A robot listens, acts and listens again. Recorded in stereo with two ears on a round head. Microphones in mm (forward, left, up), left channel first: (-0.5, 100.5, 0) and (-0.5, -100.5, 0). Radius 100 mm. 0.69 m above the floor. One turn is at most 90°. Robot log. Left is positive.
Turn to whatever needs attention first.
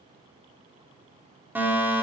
cmd yaw -30
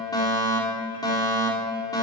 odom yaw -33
note: So it is at 20° left.
cmd yaw +20
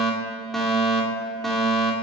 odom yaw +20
end: Facing the fire alarm.